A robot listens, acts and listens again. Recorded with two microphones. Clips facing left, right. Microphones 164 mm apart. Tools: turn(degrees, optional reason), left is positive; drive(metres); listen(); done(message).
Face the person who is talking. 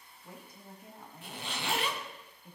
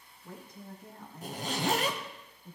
turn(degrees=30)
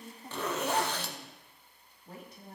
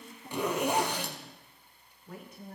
turn(degrees=140, reason="So it is at 140° left.")
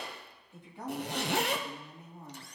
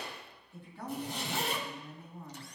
turn(degrees=20, reason="The woman speaking is now 20° left.")
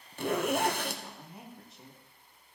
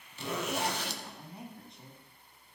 done("Facing the woman speaking, 2 to 4 m away.")